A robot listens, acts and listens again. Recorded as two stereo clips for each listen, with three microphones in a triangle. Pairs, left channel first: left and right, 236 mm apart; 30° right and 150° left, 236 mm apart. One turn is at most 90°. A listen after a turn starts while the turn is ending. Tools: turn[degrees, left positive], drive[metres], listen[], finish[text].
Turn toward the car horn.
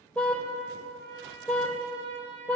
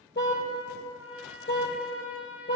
Action: finish[Facing the car horn.]